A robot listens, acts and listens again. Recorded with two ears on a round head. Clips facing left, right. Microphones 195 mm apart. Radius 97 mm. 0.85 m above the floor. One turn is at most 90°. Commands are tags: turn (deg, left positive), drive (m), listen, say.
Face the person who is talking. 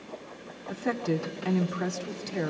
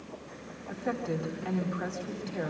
<turn deg="55"/>
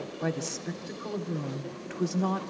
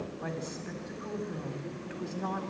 <turn deg="65"/>
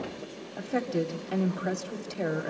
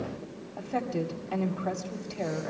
<turn deg="20"/>
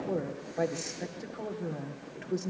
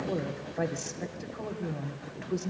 <say>Facing the woman speaking.</say>